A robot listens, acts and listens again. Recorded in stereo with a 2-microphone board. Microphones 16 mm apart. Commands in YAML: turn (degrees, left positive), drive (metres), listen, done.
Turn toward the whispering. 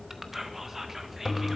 turn: -20
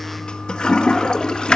listen: true
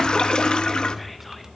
listen: true
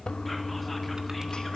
done: "I heard whispering, but can't make it out now. It was about straight ahead or 140° right."